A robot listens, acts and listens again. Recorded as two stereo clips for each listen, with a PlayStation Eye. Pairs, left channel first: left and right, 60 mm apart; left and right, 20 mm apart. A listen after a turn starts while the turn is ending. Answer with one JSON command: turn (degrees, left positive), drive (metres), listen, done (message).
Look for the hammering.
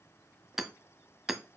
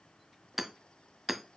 {"turn": -30}
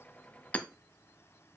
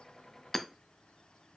{"turn": 25}
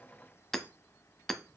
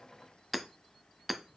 {"done": "Facing the hammering, under 1 m away."}